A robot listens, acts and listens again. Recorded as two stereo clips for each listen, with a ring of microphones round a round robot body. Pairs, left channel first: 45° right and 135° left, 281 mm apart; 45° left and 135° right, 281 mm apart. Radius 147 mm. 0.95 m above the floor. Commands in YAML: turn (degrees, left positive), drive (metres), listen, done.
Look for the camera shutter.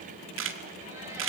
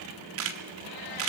turn: -175
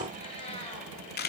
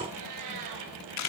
turn: 15
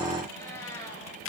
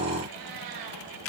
done: "Facing the camera shutter, 1 to 2 m away."